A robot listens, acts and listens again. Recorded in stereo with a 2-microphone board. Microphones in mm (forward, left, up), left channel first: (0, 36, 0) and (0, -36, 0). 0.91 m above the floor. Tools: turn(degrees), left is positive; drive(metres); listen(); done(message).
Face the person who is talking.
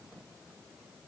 listen()
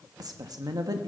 turn(degrees=-60)
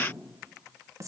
turn(degrees=-50)
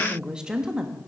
turn(degrees=-10)
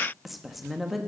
done("Found it: a woman speaking, straight ahead.")